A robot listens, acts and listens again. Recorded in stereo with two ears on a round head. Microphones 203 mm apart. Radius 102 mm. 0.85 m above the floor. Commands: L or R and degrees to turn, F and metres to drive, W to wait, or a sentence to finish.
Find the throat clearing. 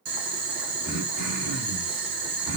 L40
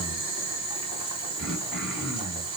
Found it: throat clearing, straight ahead, 1 to 2 m away.